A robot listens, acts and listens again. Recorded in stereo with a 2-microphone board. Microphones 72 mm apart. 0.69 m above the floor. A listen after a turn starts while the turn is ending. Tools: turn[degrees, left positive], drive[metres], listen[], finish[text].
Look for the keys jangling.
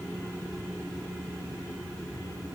Action: listen[]
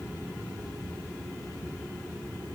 Action: listen[]
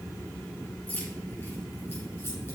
Thought: The keys jangling: about 25° left or 155° left.
Action: turn[25]
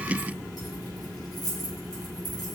Thought: So it is at 120° left.
Action: turn[120]
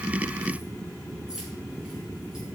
Action: listen[]
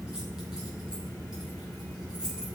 Thought: The keys jangling is now 10° right.
Action: turn[-10]
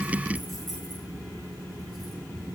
Action: listen[]
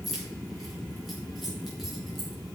Action: finish[Found it: keys jangling, straight ahead, over 4 m away.]